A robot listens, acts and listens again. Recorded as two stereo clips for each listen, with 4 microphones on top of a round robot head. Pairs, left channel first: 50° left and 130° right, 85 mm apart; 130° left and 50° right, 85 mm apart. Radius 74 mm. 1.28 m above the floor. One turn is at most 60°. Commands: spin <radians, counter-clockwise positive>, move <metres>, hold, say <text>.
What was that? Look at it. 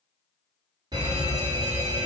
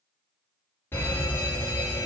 spin -1.05
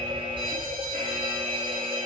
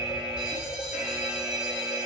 spin -1.05
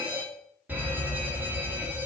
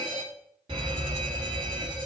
spin -1.05
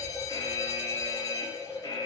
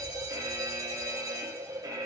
say Facing the fire alarm.